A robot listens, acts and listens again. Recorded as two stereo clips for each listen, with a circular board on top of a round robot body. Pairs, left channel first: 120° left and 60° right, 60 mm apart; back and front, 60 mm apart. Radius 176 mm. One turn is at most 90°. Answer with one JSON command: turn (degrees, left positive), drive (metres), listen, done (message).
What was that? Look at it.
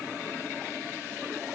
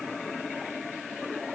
{"listen": true}
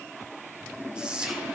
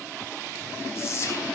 {"turn": -90}
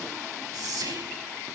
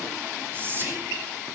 {"turn": -55}
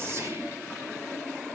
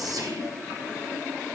{"listen": true}
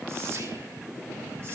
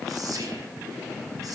{"listen": true}
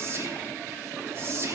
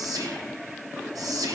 {"turn": -15}
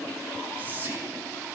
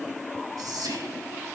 {"done": "Found it: whispering, straight ahead."}